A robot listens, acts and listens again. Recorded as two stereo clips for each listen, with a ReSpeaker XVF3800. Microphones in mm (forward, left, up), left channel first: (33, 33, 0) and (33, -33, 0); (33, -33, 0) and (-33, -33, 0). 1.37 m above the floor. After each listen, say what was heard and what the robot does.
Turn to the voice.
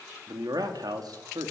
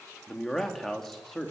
The man speaking: 85° right. Turn 85° right.
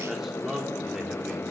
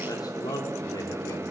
Found it: a man speaking, straight ahead.